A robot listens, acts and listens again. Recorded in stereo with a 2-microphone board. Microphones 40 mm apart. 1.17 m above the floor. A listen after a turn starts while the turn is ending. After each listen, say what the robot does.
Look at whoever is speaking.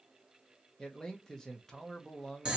Turn 15° left.
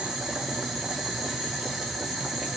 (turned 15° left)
Keep listening.
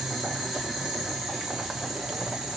Keep listening.
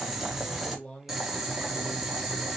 Turn 150° left.
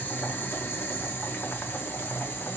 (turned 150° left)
Keep listening.
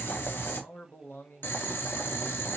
Turn 65° left.
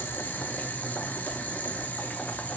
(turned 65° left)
Keep listening.
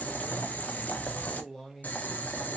Turn 10° left.
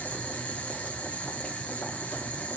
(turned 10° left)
Keep listening.
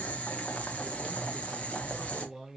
Found it: a man speaking, straight ahead.